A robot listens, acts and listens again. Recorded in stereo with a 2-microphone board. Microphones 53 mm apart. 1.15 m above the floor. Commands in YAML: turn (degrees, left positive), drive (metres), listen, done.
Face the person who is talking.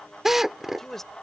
turn: 30
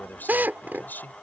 turn: 145
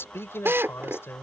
turn: 50
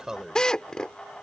turn: -15
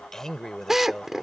turn: 10
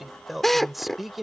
done: "Facing the man speaking."